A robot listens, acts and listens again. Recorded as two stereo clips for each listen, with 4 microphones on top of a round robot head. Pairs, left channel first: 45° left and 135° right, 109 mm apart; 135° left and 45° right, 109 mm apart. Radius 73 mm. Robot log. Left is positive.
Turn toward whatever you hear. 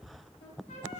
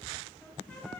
note: The trumpet: 55° left.
cmd yaw +55
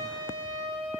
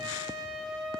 end: Facing the trumpet, 2 to 4 m away.